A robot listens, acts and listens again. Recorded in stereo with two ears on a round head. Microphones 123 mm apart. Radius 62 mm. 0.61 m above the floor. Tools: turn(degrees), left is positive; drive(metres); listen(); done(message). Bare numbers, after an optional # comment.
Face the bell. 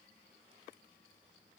listen()
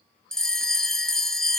turn(30)
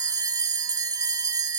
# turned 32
# So it is at 25° right.
turn(-25)
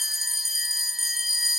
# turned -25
done("Facing the bell, 1 to 2 m away.")